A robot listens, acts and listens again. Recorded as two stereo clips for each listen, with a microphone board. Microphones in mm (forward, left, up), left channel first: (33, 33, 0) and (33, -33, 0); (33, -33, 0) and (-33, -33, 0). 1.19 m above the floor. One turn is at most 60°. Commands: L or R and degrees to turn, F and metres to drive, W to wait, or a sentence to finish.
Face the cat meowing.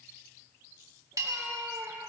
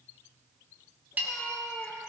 R60
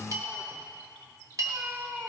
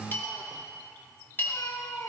R30
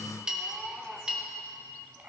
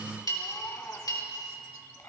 R25
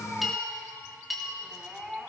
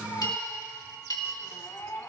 R15
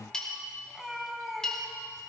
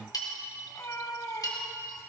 Found it: a cat meowing, straight ahead.